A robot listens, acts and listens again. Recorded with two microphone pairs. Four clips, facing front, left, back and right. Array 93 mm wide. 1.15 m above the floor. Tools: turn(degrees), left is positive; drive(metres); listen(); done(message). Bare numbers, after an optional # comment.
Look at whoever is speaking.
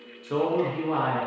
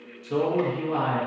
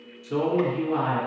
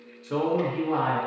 # The man speaking: 20° right.
turn(-20)
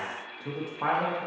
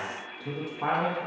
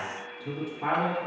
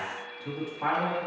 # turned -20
done("Facing the man speaking.")